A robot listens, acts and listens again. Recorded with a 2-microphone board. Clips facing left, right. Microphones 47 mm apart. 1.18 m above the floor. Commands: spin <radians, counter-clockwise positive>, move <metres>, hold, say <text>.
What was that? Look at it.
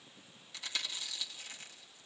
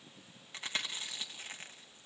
spin -0.61
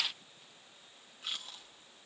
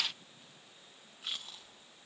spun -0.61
say Facing the chewing, 1 to 2 m away.